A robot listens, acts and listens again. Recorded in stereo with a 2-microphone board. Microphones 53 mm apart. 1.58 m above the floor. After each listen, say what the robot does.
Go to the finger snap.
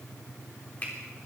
Turn 30° left.
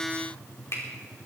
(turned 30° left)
Turn 125° left.
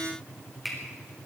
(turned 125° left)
Drive 1.0 m forward.
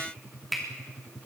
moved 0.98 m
Drive 1.0 m forward.
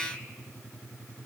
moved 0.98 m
Keep listening.
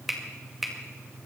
Drive 1.0 m forward.
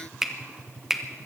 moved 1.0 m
Turn 10° right.
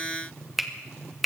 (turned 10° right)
Drive 1.0 m forward.
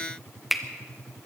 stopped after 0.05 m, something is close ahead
I am next to the finger snap.